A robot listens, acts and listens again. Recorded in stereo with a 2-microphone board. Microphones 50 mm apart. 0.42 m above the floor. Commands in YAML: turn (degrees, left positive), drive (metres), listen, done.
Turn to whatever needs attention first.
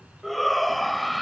turn: 30
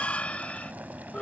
turn: 150
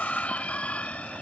turn: 35
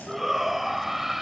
done: "Found it: a shout, straight ahead."